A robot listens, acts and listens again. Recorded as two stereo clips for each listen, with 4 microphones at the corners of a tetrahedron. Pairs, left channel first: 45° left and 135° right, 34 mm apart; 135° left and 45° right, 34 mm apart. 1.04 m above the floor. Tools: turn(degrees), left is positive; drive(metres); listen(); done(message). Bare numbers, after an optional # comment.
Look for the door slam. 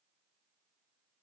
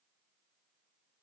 listen()
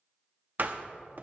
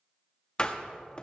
# The door slam: 165° right.
turn(-165)
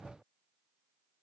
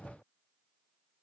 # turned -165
done("I heard a door slam from this way, but can't make it out now.")